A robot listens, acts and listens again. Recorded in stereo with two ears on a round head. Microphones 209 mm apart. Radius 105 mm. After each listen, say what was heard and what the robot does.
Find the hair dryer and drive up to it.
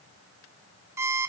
Keep listening.
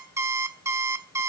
Keep listening.
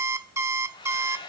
The hair dryer: about 20° left or 160° left. Turn 20° left.
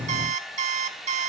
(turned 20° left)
Drive 1.0 m forward.
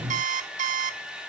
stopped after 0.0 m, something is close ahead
Blocked. The hair dryer is further on, straight ahead.